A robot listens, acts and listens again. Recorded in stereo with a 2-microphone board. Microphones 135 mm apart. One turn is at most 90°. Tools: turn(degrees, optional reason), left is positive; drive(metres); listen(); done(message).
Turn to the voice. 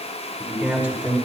turn(degrees=-30)
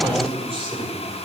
turn(degrees=-90, reason="So it is at 140° right.")
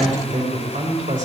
turn(degrees=-80, reason="The man speaking is now 80° right.")
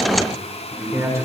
turn(degrees=-25, reason="The man speaking is now 25° right.")
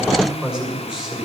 done("Facing the man speaking.")